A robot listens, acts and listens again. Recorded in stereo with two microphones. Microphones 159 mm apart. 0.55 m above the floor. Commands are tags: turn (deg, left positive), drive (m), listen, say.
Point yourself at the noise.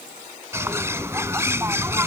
<turn deg="-15"/>
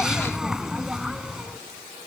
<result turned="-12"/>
<say>Found it: a bird, straight ahead.</say>